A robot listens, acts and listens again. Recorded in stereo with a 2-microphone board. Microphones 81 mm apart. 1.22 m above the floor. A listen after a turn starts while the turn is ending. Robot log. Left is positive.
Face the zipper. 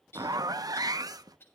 note: The zipper: about 50° right or 130° right.
cmd yaw -50
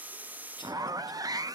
note: So it is at 65° right.
cmd yaw -65
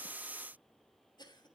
cmd idle
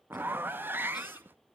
note: The zipper is now 30° right.
cmd yaw -30
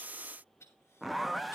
end: Found it: a zipper, straight ahead.